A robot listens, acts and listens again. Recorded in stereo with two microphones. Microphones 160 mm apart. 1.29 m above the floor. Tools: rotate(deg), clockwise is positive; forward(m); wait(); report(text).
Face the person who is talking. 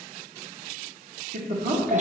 rotate(60)
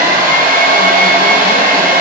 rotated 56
wait()
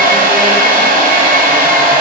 wait()
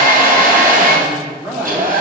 rotate(15)
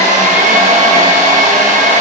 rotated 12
wait()
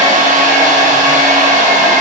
wait()
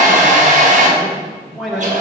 report("Found it: a man speaking, straight ahead, 1 to 2 m away.")